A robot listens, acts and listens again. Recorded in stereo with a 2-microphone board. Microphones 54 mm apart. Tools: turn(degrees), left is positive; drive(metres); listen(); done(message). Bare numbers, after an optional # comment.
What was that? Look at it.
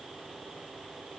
listen()
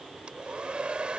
# The hair dryer: about 20° right or 160° right.
turn(-20)
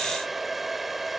done("Facing the hair dryer.")